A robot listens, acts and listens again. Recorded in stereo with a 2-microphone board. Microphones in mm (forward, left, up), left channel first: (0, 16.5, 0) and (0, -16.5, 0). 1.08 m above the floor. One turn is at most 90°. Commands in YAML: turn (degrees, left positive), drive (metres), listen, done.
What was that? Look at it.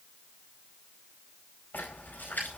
turn: 70
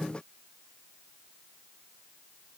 listen: true
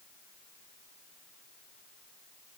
done: "I heard a splash, but can't make it out now. It was about straight ahead or 40° left."